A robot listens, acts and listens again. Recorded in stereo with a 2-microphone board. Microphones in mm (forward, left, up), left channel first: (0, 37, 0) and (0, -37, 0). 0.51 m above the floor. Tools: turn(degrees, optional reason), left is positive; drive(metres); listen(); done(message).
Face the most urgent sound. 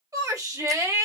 turn(degrees=-50, reason="The shout: about 50° right or 130° right.")
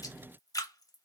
listen()
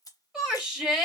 turn(degrees=-10, reason="So it is at 10° right.")
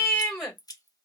done("Facing the shout, 1 to 2 m away.")